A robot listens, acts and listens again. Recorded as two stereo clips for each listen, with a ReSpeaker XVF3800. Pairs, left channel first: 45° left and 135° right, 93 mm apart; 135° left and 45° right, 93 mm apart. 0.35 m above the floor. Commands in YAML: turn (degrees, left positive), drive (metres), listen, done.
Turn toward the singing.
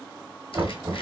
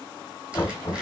listen: true
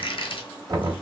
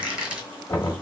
listen: true
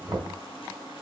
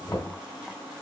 done: "I can't make out singing to turn to."